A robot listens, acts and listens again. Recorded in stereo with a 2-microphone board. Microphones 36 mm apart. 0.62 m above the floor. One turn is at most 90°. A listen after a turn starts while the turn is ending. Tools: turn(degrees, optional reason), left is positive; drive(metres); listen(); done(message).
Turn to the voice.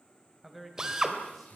turn(degrees=30)
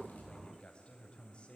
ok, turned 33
turn(degrees=90, reason="So it is at 150° left.")
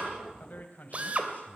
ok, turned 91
turn(degrees=55, reason="The man speaking is now 55° left.")
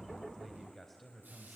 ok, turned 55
done("Found it: a man speaking, straight ahead, 2 to 4 m away.")